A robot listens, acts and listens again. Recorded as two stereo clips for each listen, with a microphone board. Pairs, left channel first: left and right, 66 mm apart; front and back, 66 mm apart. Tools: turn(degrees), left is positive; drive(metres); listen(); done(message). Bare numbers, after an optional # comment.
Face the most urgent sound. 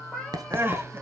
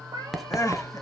# The crying: 35° right.
turn(-35)
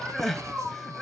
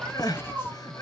done("Facing the crying, under 1 m away.")